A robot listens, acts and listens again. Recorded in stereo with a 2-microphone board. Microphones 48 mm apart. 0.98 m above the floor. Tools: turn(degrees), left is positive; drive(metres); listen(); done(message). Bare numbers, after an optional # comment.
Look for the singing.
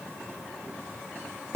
listen()
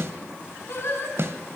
# The singing: about 60° left or 120° left.
turn(60)
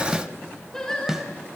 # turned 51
# So it is at 15° left.
turn(15)
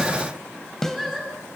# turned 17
done("Facing the singing.")